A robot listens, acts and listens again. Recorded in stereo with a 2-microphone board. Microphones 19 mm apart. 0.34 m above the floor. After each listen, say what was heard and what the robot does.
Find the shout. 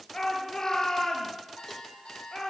The shout: about 30° left or 150° left. Turn 30° left.
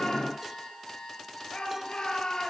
So it is at 120° left. Turn 120° left.
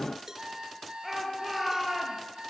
Facing the shout, over 4 m away.